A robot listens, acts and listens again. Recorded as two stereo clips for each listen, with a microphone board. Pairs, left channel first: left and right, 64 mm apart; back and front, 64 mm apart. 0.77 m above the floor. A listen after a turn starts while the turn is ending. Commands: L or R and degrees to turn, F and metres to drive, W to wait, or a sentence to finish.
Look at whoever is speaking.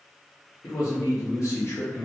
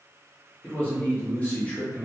L115
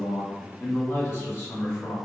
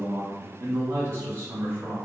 L45
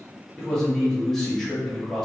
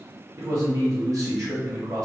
L10
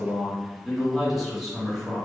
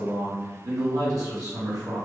Facing the man speaking.